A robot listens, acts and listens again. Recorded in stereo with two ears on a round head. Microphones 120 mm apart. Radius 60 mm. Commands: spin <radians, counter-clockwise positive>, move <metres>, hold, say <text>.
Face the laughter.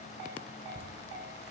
spin -0.96
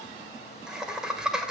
say Facing the laughter.